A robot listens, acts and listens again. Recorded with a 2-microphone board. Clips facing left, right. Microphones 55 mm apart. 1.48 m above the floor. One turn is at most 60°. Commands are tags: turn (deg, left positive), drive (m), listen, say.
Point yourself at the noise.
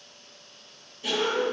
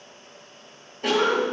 <turn deg="-60"/>
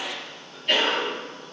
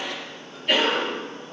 <say>Found it: a cough, straight ahead.</say>